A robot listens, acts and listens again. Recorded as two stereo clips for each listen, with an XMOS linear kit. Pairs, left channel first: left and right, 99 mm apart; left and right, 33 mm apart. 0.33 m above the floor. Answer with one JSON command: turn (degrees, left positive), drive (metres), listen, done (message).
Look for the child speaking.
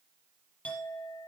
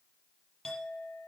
{"listen": true}
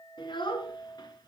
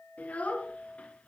{"turn": 45}
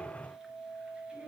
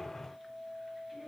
{"listen": true}
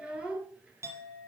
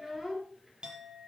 {"turn": -10}
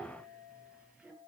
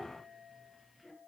{"turn": -10}
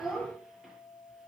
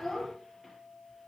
{"done": "Found it: a child speaking, straight ahead, over 4 m away."}